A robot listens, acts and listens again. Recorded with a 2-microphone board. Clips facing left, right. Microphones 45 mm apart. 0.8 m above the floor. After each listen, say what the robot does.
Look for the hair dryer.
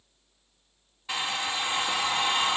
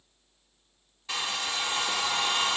Turn 15° left.
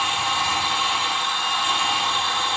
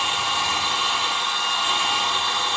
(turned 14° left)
Facing the hair dryer, 1 to 2 m away.